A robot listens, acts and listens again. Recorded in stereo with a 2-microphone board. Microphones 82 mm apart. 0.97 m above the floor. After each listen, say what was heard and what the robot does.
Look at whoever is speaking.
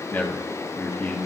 The man speaking: about 25° left or 155° left. Turn 25° left.
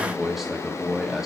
Found it: a man speaking, straight ahead.